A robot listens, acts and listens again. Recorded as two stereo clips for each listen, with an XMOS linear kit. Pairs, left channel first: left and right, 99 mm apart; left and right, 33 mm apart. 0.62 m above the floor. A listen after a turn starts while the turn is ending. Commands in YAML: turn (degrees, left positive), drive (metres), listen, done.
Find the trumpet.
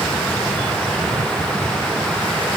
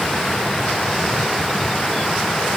listen: true
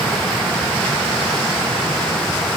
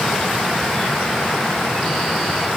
listen: true
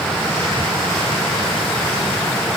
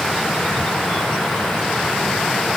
done: "I can't make out a trumpet to turn to."